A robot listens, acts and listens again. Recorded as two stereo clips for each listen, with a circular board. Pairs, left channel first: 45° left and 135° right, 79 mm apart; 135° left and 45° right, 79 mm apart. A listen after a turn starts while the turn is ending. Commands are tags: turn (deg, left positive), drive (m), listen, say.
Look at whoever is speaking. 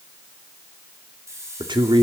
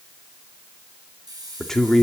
<turn deg="-140"/>
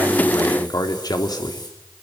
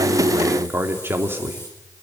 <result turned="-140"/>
<turn deg="15"/>
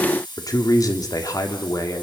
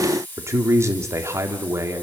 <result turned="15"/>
<say>Found it: a man speaking, straight ahead, 2 to 4 m away.</say>